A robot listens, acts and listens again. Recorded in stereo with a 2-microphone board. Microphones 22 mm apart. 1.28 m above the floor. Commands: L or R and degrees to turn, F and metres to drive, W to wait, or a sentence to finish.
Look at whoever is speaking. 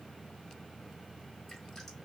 W
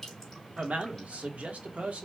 R70
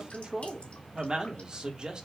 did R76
R35
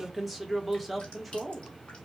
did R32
Found it: a man speaking, straight ahead, 1 to 2 m away.